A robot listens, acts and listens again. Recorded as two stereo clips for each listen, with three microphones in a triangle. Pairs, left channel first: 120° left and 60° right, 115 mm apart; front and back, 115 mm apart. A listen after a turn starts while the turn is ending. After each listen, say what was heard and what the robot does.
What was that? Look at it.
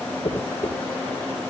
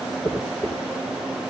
The dropped coin: 80° left. Turn 80° left.
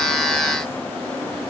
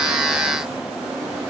I heard a dropped coin from this way, but can't make it out now.